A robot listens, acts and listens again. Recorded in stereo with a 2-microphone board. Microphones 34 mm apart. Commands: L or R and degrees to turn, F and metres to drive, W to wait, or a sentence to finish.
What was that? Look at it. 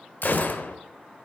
L55
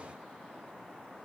W
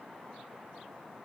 I heard a gunshot, but can't make it out now. It was about straight ahead or 70° left.